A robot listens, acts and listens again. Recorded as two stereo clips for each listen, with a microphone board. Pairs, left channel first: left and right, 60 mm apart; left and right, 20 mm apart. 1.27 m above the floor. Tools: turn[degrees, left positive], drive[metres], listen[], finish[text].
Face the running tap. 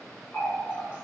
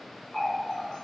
Thought: The running tap: about 35° left or 145° left.
Action: turn[35]
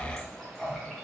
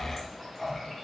Action: finish[Facing the running tap, under 1 m away.]